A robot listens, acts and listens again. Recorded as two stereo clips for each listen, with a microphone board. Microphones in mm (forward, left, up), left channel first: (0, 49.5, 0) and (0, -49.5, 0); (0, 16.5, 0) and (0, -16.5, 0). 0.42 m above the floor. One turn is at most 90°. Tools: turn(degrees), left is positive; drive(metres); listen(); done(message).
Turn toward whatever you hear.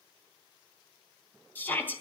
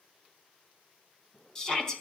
turn(degrees=20)
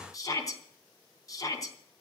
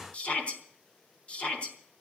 turn(degrees=90)
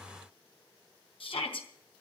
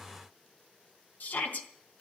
turn(degrees=75)
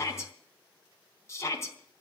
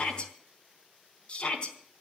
turn(degrees=30)
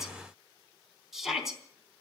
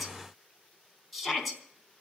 done("Found it: a shout, straight ahead.")